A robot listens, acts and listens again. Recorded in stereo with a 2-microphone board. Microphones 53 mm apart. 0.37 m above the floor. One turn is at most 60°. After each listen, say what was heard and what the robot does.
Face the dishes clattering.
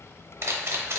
Keep listening.
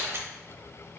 Keep listening.
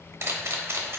I can't make out dishes clattering to turn to.